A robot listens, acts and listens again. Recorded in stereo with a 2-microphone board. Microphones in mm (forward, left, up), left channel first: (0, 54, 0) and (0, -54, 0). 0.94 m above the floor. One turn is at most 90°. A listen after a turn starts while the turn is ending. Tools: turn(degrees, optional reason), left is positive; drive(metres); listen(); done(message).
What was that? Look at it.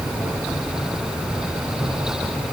listen()
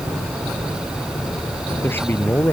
turn(degrees=20, reason="The man speaking: about 20° left or 160° left.")
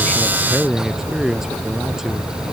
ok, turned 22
done("Facing the man speaking.")